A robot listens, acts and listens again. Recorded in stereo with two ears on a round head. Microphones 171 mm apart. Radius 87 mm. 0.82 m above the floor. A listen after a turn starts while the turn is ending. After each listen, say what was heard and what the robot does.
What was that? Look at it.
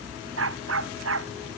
The dog barking: about 70° right or 110° right. Turn 70° right.
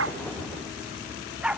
Found it: a dog barking, straight ahead.